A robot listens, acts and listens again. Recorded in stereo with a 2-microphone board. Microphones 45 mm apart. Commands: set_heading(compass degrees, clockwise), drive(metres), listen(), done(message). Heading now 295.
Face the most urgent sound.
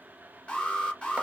set_heading(270)
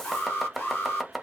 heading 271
set_heading(141)
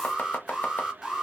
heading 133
set_heading(143)
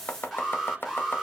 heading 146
done("Found it: an alarm, straight ahead.")